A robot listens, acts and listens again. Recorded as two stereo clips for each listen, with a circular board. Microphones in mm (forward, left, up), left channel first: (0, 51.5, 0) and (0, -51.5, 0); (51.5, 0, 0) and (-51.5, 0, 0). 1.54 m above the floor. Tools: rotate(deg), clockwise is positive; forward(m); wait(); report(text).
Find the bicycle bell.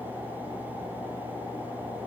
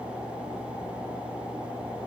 wait()
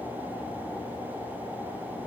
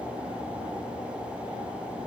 wait()
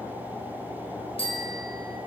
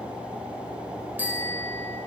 rotate(-105)
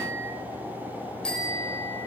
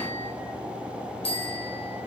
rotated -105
rotate(-10)
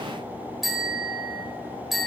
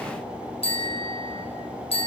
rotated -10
report("Facing the bicycle bell, over 4 m away.")